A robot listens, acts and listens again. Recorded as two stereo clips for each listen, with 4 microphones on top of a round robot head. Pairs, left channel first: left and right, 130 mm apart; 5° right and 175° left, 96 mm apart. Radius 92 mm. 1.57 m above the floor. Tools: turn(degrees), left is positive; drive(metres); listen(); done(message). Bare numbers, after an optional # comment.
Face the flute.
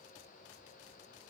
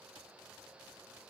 listen()
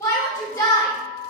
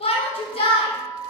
# The flute: 50° left.
turn(50)
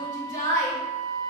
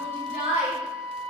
# The flute is now 10° right.
turn(-10)
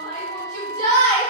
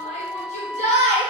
done("Found it: a flute, straight ahead.")